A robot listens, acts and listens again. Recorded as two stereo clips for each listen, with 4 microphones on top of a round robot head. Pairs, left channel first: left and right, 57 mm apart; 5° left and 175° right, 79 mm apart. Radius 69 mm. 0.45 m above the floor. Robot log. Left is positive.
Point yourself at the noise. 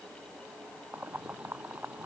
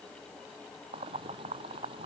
note: The boiling: 165° right.
cmd yaw -165
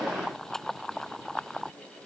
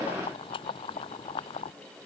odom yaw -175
note: The boiling is now 10° left.
cmd yaw +10
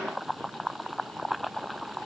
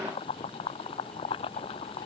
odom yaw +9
end: Facing the boiling.